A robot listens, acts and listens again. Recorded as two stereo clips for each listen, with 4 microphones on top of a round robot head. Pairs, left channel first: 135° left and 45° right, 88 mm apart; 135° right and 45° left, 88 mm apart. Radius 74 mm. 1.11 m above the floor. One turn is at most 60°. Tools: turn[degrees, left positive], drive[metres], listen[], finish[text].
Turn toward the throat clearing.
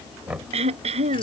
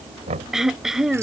Thought: The throat clearing: 45° right.
Action: turn[-45]
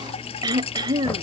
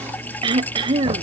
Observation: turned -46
Action: finish[Facing the throat clearing.]